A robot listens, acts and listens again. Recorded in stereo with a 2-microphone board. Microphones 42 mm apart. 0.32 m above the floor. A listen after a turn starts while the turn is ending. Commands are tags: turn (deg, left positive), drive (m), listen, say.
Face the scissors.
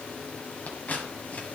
<turn deg="40"/>
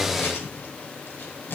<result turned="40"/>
<turn deg="90"/>
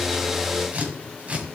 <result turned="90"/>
<turn deg="-40"/>
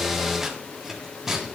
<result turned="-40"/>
<turn deg="-10"/>
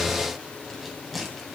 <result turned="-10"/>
<say>Found it: scissors, straight ahead, 1 to 2 m away.</say>